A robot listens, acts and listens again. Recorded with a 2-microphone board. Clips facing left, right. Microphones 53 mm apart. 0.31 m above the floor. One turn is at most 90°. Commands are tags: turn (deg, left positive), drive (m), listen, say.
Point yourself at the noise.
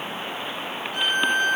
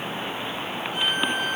<turn deg="-30"/>
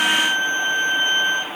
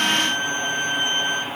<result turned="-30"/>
<turn deg="25"/>
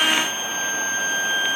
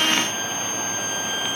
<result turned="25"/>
<turn deg="25"/>
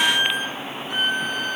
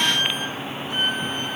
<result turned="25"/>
<say>Facing the violin.</say>